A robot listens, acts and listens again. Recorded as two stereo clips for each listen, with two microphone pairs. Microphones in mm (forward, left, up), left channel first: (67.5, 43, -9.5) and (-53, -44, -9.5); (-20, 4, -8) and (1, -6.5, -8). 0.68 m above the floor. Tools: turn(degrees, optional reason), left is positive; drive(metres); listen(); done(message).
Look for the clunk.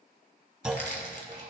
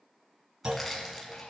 turn(degrees=-60, reason="The clunk: 60° right.")
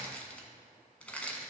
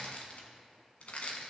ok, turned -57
done("Facing where the clunk came from. I can't hear it now.")